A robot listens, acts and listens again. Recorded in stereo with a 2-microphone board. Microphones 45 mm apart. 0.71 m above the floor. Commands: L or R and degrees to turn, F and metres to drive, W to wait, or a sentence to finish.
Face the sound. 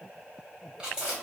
R15
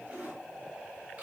R150
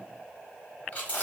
L30
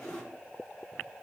L10
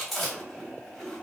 Found it: chewing, straight ahead.